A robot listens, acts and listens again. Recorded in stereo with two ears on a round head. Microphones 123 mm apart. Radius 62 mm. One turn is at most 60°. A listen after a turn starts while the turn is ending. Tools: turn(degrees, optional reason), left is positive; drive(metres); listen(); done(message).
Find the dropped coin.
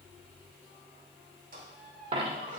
turn(degrees=-40, reason="The dropped coin: about 40° right or 140° right.")
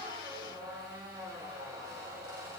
listen()
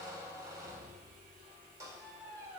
done("I heard a dropped coin, but can't make it out now. It was about straight ahead or 100° right.")